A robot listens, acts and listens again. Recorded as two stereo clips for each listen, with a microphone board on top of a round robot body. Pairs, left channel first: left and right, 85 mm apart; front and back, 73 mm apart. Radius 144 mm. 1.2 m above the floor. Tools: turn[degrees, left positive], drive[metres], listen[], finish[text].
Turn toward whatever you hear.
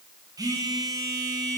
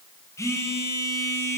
Thought: The phone buzzing: 45° right.
Action: turn[-45]
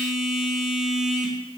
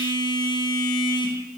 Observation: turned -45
Action: finish[Facing the phone buzzing, 1 to 2 m away.]